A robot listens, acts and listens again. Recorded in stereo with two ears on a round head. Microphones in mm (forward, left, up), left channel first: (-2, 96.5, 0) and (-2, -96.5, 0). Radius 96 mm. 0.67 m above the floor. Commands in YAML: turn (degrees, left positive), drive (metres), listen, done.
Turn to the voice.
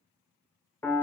listen: true
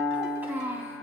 turn: -30
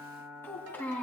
turn: 10
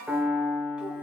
listen: true
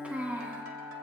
turn: -10
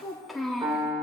done: "Facing the child speaking, 2 to 4 m away."